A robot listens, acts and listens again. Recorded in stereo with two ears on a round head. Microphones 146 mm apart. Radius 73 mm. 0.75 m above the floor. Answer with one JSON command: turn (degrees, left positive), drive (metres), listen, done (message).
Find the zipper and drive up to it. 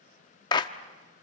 {"listen": true}
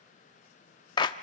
{"listen": true}
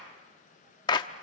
{"done": "I can't make out a zipper, only a clap."}